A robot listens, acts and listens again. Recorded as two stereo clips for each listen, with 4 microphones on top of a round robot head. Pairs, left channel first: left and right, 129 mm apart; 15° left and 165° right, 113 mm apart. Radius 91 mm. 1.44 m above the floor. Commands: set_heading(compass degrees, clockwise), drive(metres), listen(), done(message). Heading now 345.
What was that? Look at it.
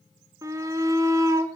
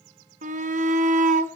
set_heading(145)
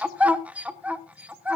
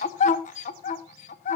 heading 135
set_heading(145)
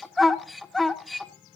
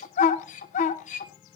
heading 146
done("Found it: a shout, straight ahead.")